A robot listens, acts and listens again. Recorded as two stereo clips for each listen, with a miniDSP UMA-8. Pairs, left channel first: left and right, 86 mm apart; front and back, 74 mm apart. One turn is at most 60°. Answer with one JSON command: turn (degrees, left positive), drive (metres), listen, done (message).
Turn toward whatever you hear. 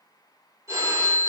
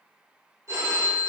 {"turn": -60}
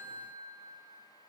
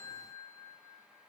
{"turn": -60}
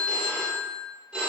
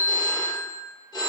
{"turn": -10}
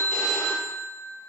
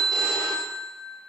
{"done": "Facing the phone ringing, 1 to 2 m away."}